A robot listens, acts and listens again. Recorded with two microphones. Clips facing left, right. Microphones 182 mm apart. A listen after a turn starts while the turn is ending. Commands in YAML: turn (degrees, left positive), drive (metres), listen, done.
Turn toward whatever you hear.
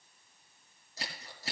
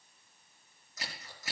turn: 30
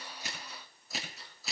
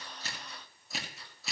done: "Found it: scissors, straight ahead."